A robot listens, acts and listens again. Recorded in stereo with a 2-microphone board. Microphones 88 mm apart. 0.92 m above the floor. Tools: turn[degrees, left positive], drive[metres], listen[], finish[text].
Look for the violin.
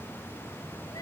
Action: listen[]
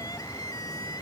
Action: listen[]
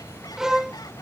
Action: turn[-30]
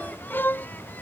Thought: So it is at 25° left.
Action: turn[25]
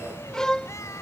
Thought: The violin is now 10° left.
Action: turn[10]
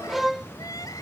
Action: finish[Found it: a violin, straight ahead.]